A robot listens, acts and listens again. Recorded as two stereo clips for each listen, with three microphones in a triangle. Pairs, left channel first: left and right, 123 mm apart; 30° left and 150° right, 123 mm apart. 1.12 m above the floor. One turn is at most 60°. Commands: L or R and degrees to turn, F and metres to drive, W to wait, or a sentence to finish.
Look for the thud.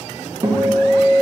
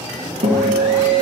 W
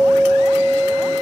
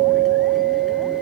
W
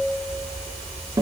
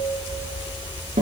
I can't make out a thud to turn to.